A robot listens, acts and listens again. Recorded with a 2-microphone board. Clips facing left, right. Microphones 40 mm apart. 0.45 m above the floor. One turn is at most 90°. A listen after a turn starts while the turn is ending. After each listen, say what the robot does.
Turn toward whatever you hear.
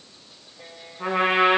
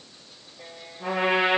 Turn 70° left.
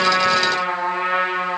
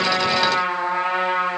Turn 35° left.
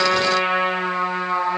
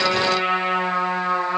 Found it: a trumpet, straight ahead.